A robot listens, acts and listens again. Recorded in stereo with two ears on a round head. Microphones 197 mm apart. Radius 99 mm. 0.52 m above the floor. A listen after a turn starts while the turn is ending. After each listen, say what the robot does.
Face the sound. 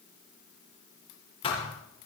Turn 25° left.
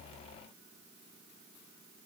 Keep listening.
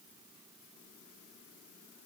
I heard a thud, but can't make it out now. It was about straight ahead or 130° left.